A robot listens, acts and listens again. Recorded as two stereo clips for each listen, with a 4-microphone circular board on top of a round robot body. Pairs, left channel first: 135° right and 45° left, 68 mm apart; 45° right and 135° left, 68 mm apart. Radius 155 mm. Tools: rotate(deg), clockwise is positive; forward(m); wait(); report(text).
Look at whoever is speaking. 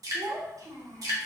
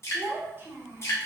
rotate(-80)
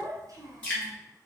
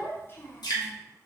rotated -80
rotate(-10)
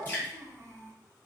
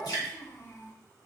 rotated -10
report("Found it: a child speaking, straight ahead.")